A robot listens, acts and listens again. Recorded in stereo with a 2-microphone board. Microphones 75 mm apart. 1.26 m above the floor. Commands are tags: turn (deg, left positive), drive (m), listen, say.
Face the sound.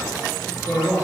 <turn deg="30"/>
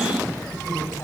<listen/>
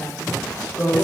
<turn deg="145"/>
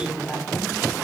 <say>Facing the woman speaking.</say>